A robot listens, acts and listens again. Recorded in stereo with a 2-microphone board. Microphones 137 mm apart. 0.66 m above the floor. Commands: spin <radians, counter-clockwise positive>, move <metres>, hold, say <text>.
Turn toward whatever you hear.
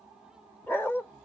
spin 0.26
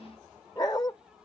spin 2.62
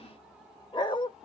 spin 0.61
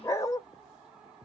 spin 0.44
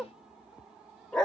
say Found it: a dog barking, straight ahead.